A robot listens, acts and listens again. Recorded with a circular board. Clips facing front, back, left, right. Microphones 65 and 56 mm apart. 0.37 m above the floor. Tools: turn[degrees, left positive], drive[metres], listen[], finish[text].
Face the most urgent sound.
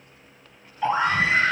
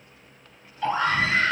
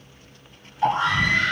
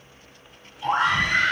Thought: The scream: 65° right.
Action: turn[-65]
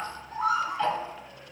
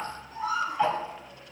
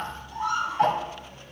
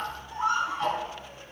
Thought: The scream is now 30° right.
Action: turn[-30]
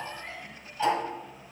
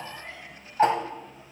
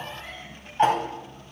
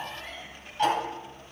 Action: listen[]
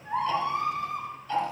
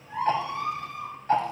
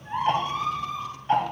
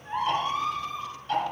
Action: finish[Found it: a scream, straight ahead.]